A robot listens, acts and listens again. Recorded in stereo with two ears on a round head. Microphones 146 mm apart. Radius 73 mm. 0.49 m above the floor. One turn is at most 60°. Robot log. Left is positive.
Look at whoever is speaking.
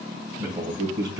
note: The man speaking: about 25° right or 155° right.
cmd yaw -25
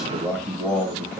end: Found it: a man speaking, straight ahead, 2 to 4 m away.